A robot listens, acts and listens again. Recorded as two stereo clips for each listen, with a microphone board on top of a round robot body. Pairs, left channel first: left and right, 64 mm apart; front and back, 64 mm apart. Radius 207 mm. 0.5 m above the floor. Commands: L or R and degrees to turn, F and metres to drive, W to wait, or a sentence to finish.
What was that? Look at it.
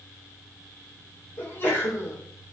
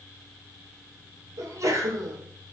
L145
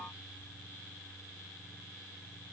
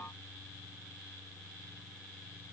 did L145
Facing where the sneeze came from. I can't hear it now.